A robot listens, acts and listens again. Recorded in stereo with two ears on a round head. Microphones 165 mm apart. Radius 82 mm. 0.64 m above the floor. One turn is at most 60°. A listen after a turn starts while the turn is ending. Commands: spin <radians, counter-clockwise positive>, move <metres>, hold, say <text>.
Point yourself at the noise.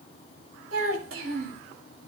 spin -1.05
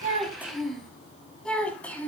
spin 0.17
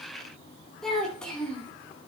say Found it: a child speaking, straight ahead.